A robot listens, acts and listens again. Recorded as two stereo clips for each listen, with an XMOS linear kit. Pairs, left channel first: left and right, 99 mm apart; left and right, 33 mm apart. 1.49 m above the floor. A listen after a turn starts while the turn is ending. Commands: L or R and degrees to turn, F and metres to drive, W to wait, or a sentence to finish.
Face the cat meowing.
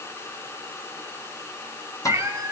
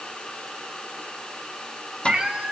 R35
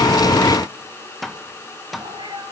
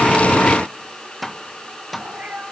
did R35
R110
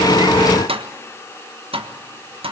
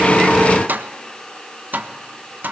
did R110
W
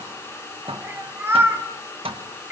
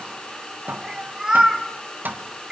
R25
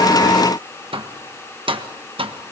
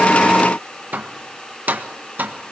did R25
W
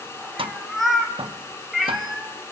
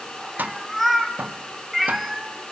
Found it: a cat meowing, straight ahead, 2 to 4 m away.